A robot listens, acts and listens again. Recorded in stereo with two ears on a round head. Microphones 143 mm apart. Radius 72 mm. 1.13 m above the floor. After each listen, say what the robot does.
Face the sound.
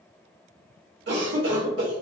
Turn 70° right.
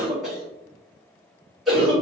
Found it: a cough, straight ahead, 1 to 2 m away.